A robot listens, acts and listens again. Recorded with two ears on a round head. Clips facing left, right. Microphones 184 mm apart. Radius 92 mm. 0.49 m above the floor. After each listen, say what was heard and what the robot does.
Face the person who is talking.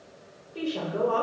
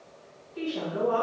The woman speaking: about 60° left or 120° left. Turn 60° left.
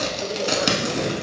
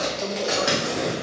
Keep listening.
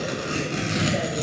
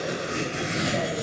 Keep listening.
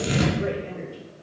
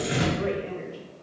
So it is at 30° left. Turn 30° left.
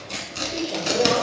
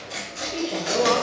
The woman speaking is now 10° left. Turn 10° left.
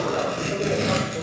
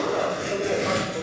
Keep listening.
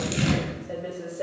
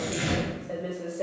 Found it: a woman speaking, straight ahead, 1 to 2 m away.